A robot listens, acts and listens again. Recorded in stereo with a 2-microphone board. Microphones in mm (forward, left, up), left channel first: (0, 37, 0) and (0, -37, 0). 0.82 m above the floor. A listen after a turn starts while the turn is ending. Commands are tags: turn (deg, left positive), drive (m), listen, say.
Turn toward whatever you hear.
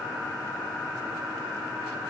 <listen/>
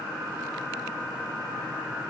<listen/>
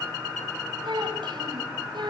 <turn deg="-90"/>
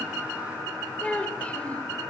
<turn deg="15"/>
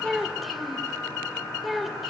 <say>Facing the child speaking, 2 to 4 m away.</say>